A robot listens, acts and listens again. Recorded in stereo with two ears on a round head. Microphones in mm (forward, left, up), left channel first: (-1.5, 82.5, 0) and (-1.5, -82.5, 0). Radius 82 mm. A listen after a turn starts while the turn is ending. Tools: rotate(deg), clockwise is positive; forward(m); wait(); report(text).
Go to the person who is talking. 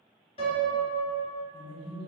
rotate(-30)
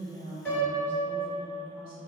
rotate(-115)
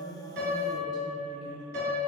wait()
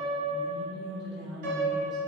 forward(1.0)
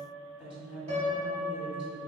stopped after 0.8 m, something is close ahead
rotate(10)
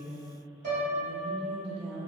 report("I am next to the woman speaking.")